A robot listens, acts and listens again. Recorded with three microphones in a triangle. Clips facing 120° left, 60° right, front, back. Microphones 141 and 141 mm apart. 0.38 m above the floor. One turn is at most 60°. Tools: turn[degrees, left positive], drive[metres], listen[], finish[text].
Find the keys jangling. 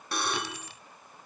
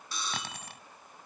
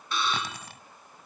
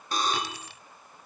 Thought: The keys jangling: 35° right.
Action: turn[-35]
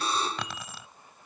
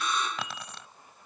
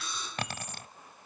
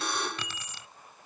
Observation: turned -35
Thought: The keys jangling is now 35° left.
Action: turn[35]
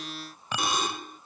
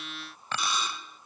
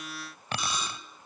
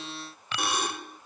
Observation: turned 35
Thought: The keys jangling is now 45° left.
Action: turn[45]
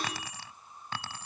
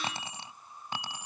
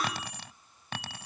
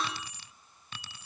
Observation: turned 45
Thought: The keys jangling is now 15° left.
Action: turn[15]
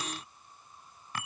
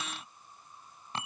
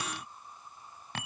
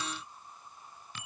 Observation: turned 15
Action: finish[Facing the keys jangling.]